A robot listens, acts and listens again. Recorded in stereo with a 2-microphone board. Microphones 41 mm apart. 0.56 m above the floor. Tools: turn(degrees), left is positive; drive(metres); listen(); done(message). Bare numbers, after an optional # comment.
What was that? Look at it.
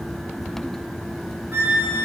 turn(-90)
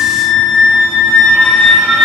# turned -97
# So it is at 20° left.
turn(20)
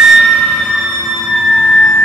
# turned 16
done("Found it: a flute, straight ahead, 2 to 4 m away.")